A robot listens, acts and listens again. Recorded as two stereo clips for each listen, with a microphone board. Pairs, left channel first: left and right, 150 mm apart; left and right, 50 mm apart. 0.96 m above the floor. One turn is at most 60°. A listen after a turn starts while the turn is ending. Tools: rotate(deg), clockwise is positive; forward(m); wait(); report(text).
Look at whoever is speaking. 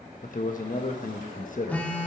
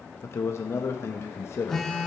rotate(-60)
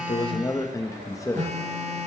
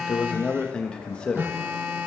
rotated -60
rotate(-25)
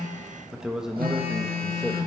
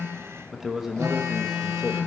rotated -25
report("Found it: a man speaking, straight ahead, 1 to 2 m away.")